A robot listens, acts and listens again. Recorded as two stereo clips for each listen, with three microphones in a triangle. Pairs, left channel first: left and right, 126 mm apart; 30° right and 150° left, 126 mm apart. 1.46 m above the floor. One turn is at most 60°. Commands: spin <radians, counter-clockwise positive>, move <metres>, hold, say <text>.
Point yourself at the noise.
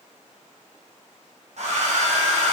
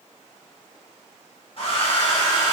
spin -1.05
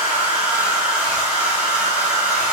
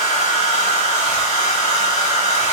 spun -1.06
spin -0.17
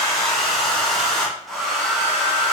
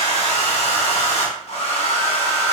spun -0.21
say Found it: a hair dryer, straight ahead, 1 to 2 m away.